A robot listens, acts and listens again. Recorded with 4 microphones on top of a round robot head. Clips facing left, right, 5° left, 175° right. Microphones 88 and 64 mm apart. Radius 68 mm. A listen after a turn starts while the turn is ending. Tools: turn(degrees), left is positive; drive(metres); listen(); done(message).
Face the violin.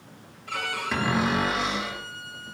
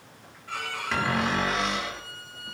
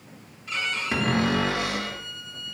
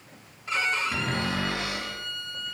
turn(degrees=135)
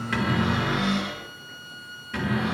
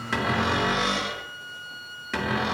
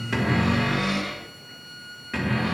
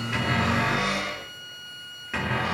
turn(degrees=30)
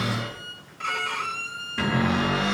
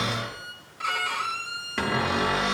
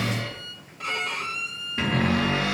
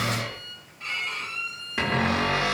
turn(degrees=-10)
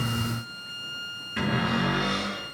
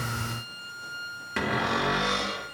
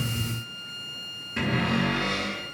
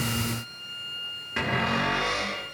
done("Found it: a violin, straight ahead, 1 to 2 m away.")